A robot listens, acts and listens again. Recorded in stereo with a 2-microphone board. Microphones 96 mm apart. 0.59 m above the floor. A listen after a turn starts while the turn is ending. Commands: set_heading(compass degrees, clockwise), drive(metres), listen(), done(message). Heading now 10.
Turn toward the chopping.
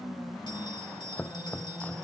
set_heading(350)
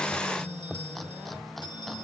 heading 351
done("Found it: chopping, straight ahead.")